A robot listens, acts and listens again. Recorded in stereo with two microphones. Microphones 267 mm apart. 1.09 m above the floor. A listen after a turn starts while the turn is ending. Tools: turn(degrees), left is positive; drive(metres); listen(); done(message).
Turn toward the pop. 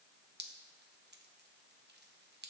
listen()
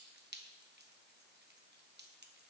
listen()
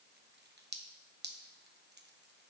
done("I can't make out a pop, only dripping.")